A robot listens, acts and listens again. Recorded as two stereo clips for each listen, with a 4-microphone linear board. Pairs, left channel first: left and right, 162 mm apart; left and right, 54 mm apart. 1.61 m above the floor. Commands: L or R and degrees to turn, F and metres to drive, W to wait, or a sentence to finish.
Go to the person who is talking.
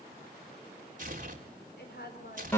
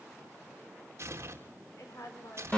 L75
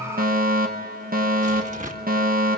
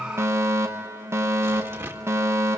W
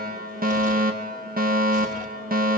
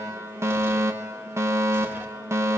W
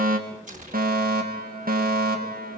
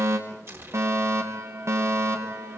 I heard a woman speaking, but can't make it out now. It was about straight ahead or 30° left. I did not reach it.